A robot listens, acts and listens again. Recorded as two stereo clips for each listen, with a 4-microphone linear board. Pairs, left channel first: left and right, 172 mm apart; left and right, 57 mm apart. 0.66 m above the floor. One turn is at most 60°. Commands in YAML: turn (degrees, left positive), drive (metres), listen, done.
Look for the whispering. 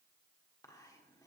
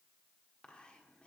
turn: 20
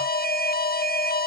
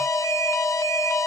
listen: true
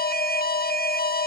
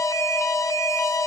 listen: true
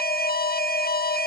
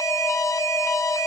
done: "I heard whispering, but can't make it out now. It was about straight ahead or 140° left."